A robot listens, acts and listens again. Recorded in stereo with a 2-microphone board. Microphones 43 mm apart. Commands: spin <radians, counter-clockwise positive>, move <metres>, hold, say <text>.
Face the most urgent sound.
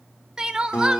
spin -0.35
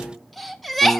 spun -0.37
say Found it: crying, straight ahead.